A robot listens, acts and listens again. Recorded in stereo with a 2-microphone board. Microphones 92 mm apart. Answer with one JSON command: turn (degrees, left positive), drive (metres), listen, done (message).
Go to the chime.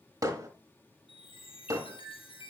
{"turn": 75}
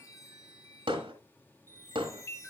{"turn": 30}
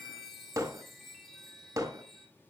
{"drive": 1.0}
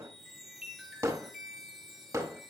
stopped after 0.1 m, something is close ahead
{"done": "Something is in my way. I am facing the chime but have not reached it."}